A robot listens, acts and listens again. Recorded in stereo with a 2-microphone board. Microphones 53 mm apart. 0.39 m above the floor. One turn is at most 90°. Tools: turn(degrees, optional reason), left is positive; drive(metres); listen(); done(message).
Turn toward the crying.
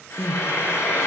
turn(degrees=-25, reason="The crying: about 25° right or 155° right.")
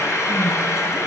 listen()
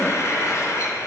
listen()
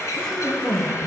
done("Found it: crying, straight ahead, 1 to 2 m away.")